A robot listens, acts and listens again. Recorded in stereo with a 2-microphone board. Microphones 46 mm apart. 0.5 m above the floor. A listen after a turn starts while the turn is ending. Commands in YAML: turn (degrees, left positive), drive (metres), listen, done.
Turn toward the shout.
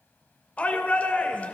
turn: 30
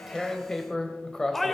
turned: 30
done: "Found it: a shout, straight ahead, 1 to 2 m away."